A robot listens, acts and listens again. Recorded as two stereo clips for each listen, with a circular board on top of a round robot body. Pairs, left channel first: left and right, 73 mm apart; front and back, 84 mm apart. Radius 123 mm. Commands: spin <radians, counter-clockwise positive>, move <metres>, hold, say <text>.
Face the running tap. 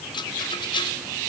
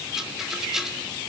hold
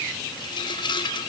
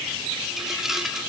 hold
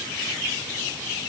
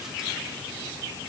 say I can't make out a running tap, only a rattle.